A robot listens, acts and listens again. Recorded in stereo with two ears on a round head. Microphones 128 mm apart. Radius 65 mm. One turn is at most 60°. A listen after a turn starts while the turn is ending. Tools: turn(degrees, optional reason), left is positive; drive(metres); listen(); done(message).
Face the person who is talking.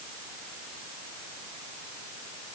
listen()
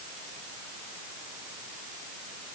listen()
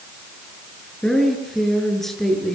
turn(degrees=30)
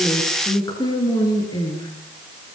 turn(degrees=60, reason="So it is at 150° left.")
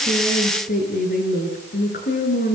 turn(degrees=60, reason="The woman speaking is now 115° left.")
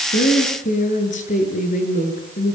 turn(degrees=55, reason="The woman speaking is now 55° left.")
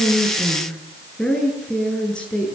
done("Facing the woman speaking.")